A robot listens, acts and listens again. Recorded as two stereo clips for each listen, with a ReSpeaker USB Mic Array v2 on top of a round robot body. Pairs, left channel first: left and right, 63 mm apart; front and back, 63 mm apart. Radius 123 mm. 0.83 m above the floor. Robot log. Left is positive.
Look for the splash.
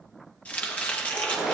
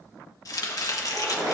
note: The splash: 170° right.
cmd yaw -170
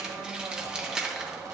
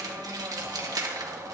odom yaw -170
end: Facing where the splash came from. I can't hear it now.